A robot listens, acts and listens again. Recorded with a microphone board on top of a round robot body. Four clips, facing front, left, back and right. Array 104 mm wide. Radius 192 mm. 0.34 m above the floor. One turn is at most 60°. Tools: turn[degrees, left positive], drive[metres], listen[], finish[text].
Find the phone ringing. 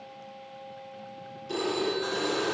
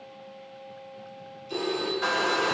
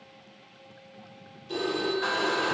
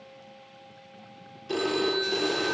Thought: The phone ringing: 75° right.
Action: turn[-60]
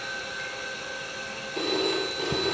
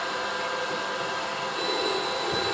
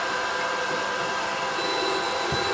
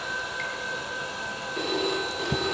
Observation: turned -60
Thought: The phone ringing is now 35° right.
Action: turn[-35]
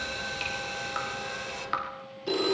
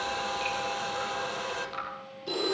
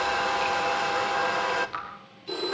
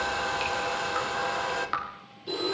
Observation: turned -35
Action: finish[Found it: a phone ringing, straight ahead, over 4 m away.]